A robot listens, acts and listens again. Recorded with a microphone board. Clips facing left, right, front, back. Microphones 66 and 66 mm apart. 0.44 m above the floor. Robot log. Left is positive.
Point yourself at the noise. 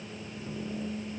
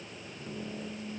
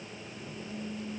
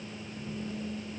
cmd idle
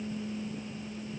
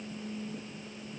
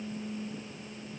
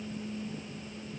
cmd idle
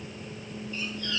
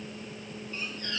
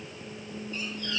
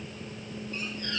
note: The squeak: 140° right.
cmd yaw -140
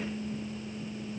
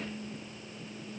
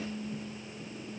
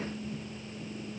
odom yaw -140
cmd idle
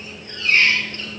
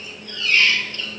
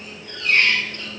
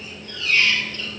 note: The squeak is now 35° left.
cmd yaw +35
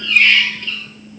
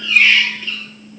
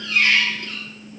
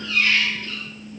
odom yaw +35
end: Found it: a squeak, straight ahead, 2 to 4 m away.